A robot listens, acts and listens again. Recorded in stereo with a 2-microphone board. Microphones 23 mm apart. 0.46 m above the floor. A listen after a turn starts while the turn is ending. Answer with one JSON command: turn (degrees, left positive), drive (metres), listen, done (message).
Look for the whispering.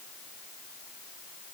{"listen": true}
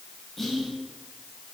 {"turn": 30}
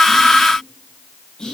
{"turn": 145}
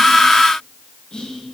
{"turn": 45}
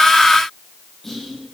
{"turn": 10}
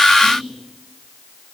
{"done": "Found it: whispering, straight ahead, 2 to 4 m away."}